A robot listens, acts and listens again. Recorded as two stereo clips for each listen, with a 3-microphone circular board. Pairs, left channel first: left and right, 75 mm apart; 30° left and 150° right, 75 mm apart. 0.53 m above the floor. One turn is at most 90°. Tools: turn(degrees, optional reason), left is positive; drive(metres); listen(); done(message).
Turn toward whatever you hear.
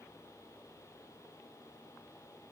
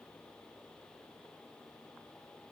listen()
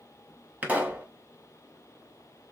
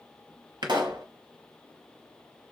turn(degrees=-90, reason="The pop: 155° right.")
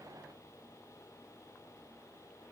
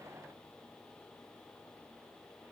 turn(degrees=-65, reason="Nothing new. It was at 65° right.")
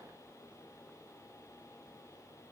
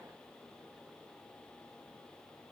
done("I heard a pop from this way, but can't make it out now.")